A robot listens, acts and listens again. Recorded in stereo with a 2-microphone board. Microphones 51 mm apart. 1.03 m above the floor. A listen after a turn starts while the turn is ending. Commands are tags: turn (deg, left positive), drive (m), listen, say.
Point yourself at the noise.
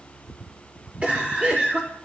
<turn deg="-30"/>
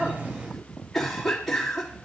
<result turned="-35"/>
<say>Facing the cough.</say>